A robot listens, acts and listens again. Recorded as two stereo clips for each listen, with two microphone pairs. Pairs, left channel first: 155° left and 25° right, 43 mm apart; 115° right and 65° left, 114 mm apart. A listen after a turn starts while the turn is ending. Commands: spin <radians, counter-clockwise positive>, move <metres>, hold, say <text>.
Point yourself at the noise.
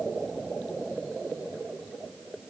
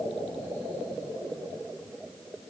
hold
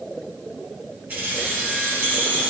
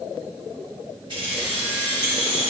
spin 0.35
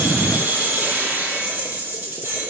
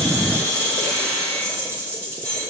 say Found it: keys jangling, straight ahead, 2 to 4 m away.